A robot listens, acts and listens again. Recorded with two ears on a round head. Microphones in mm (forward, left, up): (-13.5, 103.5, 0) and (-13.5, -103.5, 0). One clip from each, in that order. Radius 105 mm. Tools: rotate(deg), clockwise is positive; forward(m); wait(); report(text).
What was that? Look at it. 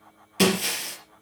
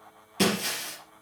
rotate(-25)
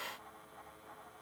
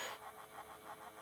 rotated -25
wait()
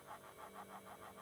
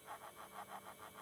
report("I heard breaking glass, but can't make it out now. It was about straight ahead or 130° left.")